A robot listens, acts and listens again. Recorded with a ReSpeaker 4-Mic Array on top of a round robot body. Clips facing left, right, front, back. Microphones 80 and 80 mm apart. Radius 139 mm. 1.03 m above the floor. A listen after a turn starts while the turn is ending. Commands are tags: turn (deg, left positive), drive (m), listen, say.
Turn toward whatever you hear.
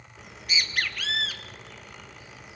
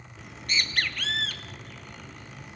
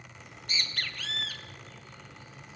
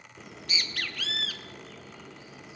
<turn deg="175"/>
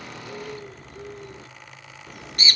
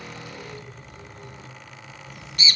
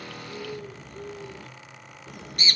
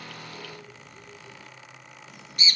<turn deg="45"/>
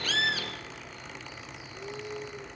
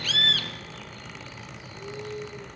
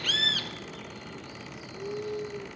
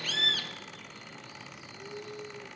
<turn deg="15"/>
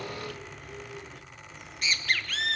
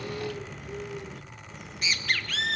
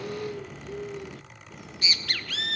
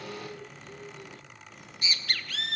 <say>Found it: a bird, straight ahead, 1 to 2 m away.</say>